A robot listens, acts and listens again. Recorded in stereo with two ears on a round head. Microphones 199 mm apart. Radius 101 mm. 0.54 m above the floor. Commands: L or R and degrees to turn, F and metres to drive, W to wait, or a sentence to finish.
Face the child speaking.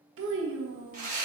R60
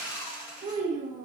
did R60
R40
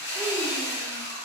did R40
W
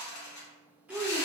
Facing the child speaking.